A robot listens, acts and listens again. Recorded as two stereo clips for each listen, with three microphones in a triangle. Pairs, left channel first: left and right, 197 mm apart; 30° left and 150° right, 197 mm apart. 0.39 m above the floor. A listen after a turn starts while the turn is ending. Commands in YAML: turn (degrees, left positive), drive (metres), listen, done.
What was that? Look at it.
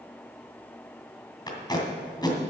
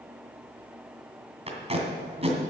turn: 155
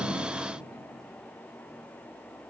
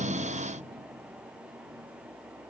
listen: true
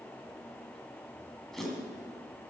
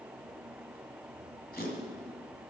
done: "Facing the tape being pulled, 2 to 4 m away."